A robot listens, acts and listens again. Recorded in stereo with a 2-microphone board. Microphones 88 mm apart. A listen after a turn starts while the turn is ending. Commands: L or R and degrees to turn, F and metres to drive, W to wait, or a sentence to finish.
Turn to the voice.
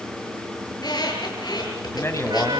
L30
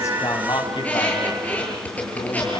L115
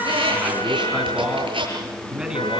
R10
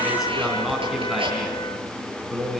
Found it: a man speaking, straight ahead, over 4 m away.